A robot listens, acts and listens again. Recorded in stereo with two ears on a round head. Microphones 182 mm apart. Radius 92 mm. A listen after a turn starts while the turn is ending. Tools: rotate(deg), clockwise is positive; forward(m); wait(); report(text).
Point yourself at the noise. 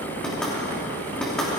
rotate(-30)
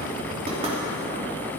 wait()
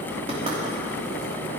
wait()
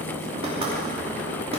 rotate(30)
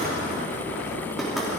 wait()
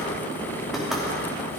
report("Facing the knocking, 2 to 4 m away.")